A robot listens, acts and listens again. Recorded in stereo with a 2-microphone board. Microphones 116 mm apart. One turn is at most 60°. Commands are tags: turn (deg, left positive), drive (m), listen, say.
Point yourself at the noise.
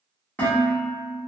<turn deg="15"/>
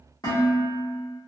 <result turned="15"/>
<turn deg="60"/>
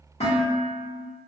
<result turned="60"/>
<turn deg="60"/>
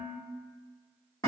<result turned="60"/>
<turn deg="30"/>
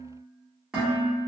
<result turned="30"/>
<say>Facing the dishes clattering.</say>